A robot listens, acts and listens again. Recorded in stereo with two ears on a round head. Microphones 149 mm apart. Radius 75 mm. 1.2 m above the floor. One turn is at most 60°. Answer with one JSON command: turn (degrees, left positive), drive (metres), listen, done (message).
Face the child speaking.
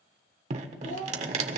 {"turn": 45}
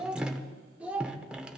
{"turn": -10}
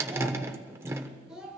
{"done": "Facing the child speaking, 2 to 4 m away."}